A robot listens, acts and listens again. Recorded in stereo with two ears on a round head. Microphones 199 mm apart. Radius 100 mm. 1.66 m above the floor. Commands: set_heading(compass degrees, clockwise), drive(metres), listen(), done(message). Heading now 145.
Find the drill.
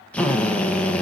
set_heading(115)
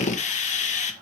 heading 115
set_heading(330)
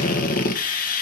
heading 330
set_heading(290)
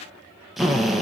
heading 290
done("Facing the drill.")